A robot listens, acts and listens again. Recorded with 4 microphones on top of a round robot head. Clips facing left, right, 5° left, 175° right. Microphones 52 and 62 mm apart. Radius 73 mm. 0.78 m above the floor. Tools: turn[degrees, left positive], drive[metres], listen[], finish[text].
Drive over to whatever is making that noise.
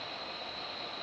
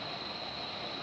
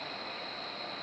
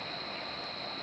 Action: listen[]
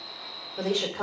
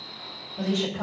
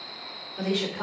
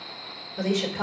Thought: The woman speaking: 105° left.
Action: turn[105]
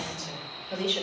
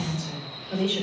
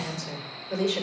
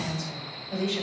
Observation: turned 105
Action: drive[1.0]
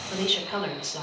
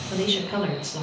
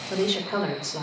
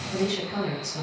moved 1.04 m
Action: drive[1.0]
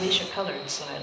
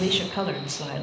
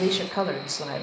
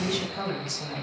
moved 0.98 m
Action: drive[1.0]
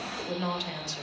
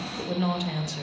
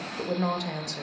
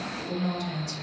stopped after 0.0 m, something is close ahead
Thought: The woman speaking is now 10° right.
Action: turn[-10]
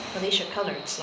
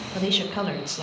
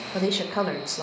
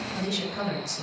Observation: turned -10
Action: finish[Arrived at the woman speaking, straight ahead.]